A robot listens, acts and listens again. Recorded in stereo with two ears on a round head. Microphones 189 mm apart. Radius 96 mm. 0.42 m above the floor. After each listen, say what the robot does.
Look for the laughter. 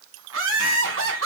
Turn 65° right.
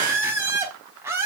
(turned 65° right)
Turn 10° right.
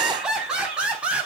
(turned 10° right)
Found it: laughter, straight ahead.